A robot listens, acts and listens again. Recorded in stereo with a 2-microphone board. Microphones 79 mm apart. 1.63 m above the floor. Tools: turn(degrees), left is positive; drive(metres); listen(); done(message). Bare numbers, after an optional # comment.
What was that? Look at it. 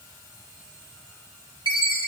# The chime: about 70° left or 110° left.
turn(70)
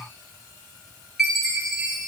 done("Found it: a chime, straight ahead.")